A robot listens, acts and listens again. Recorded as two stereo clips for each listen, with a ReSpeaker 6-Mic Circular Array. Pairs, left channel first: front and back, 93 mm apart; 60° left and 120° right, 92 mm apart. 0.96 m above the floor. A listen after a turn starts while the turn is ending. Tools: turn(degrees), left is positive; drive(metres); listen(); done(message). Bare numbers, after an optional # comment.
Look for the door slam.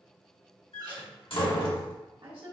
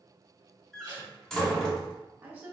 # The door slam: 25° right.
turn(-25)
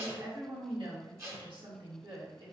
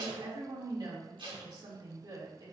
done("I heard a door slam from this way, but can't make it out now.")